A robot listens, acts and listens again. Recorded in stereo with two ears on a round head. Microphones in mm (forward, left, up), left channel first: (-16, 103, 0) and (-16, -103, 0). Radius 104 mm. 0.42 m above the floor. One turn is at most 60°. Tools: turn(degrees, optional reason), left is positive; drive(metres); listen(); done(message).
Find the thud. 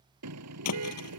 turn(degrees=60)
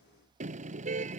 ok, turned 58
turn(degrees=30, reason="Nothing new. It was at 30° left.")
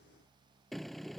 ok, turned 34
done("I heard a thud from this way, but can't make it out now.")